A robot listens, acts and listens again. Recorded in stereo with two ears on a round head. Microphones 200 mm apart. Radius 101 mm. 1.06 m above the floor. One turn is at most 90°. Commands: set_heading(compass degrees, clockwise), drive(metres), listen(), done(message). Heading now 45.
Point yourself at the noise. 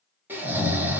set_heading(75)
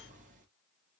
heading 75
listen()
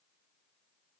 listen()
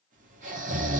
set_heading(165)
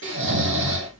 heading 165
set_heading(220)
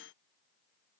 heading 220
listen()
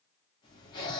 set_heading(200)
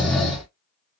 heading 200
done("Facing the snoring.")